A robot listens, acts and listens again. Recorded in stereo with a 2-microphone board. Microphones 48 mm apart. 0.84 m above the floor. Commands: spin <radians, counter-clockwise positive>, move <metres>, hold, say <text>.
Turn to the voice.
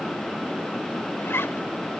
hold
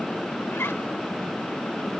hold
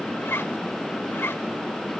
say I can't make out anyone speaking, only a zipper.